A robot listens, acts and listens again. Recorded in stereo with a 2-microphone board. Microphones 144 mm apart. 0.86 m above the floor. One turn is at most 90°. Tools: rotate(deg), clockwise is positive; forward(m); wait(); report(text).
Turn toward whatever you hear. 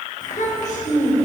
rotate(-90)
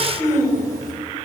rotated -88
rotate(-25)
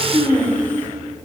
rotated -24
rotate(-15)
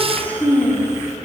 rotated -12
rotate(-20)
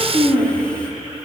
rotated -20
rotate(-10)
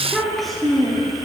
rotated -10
report("Facing the child speaking.")